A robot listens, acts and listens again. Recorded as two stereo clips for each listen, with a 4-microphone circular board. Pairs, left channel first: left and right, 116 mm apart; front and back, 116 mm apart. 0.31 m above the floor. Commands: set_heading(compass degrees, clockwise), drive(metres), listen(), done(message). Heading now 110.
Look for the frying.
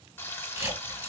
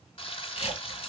set_heading(90)
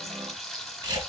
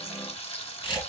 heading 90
done("Found it: frying, straight ahead, 1 to 2 m away.")